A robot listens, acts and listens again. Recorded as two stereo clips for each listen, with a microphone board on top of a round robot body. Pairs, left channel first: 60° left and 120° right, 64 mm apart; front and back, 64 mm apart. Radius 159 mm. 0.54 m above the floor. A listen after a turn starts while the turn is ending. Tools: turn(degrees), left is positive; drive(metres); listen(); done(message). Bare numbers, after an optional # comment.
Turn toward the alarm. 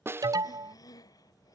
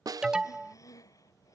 # The alarm: 100° right.
turn(-100)
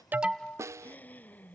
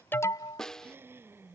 # The alarm is now 15° right.
turn(-15)
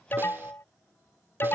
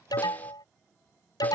done("Found it: an alarm, straight ahead.")